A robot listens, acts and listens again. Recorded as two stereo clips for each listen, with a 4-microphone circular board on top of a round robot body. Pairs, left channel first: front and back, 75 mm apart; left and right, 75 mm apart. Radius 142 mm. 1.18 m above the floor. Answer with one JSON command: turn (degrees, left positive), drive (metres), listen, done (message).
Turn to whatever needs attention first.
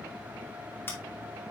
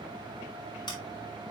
{"listen": true}
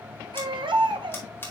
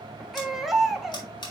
{"turn": 180}
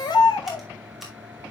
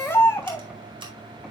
{"turn": 25}
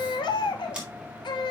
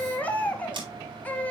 {"turn": 15}
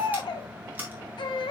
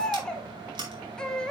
{"turn": 10}
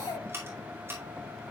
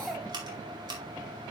{"done": "Found it: a baby crying, straight ahead."}